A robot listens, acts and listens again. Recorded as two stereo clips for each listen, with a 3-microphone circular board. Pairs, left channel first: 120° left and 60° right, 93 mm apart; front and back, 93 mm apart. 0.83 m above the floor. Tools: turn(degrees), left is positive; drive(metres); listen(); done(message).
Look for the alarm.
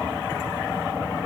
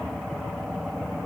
listen()
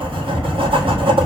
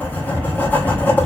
listen()
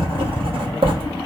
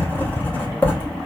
done("I can't make out an alarm to turn to.")